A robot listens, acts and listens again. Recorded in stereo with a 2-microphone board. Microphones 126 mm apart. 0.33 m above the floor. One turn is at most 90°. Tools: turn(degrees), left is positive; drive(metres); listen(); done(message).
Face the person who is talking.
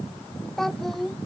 turn(degrees=30)
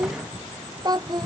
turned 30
turn(degrees=-35)
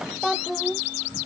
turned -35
done("Facing the child speaking.")